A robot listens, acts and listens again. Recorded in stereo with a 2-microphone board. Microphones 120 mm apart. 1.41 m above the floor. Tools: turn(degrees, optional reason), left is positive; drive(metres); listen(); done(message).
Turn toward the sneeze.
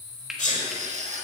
turn(degrees=65, reason="The sneeze: about 65° left or 115° left.")
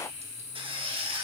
listen()
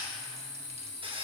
done("I heard a sneeze, but can't make it out now. It was about straight ahead or 50° left.")